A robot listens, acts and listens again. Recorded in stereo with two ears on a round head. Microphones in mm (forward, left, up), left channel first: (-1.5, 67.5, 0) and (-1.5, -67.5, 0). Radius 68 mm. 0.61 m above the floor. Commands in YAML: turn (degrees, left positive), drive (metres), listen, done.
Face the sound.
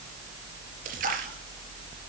turn: -60
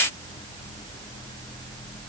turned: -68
listen: true
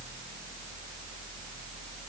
done: "I heard a splash, but can't make it out now. It was about 10° left or 50° right."